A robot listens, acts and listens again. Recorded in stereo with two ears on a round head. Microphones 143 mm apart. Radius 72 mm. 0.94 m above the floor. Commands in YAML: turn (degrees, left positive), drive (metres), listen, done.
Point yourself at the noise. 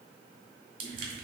turn: -60
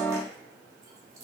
listen: true
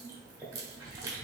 turn: -25
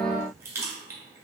turn: -20
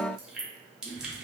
done: "Facing the crushing, 1 to 2 m away."